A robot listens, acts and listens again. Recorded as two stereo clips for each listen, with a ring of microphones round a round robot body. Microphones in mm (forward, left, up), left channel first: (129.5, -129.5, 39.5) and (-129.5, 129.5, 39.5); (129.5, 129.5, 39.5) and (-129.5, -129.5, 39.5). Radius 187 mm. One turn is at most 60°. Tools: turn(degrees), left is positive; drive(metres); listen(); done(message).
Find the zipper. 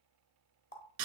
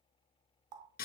listen()
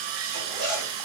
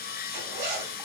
turn(degrees=-60)
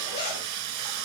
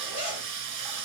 turn(degrees=-60)
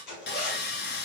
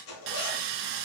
turn(degrees=-10)
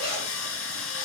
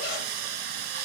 done("Found it: a zipper, straight ahead, 2 to 4 m away.")